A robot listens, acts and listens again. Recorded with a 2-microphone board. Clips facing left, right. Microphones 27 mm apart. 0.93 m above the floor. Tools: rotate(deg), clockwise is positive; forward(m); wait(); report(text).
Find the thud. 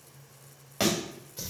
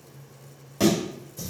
rotate(-45)
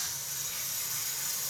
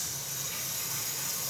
wait()
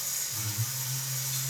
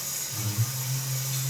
report("I heard a thud, but can't make it out now. It was about straight ahead or 90° left.")